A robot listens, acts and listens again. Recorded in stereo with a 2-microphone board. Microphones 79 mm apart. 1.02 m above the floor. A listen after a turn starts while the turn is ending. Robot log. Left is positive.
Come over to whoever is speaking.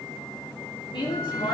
cmd yaw +90
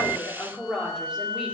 note: So it is at 10° right.
cmd yaw -10
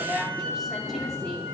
cmd fwd 1.0
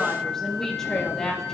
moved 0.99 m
cmd fwd 1.0
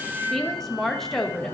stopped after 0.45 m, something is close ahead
end: I am next to the woman speaking.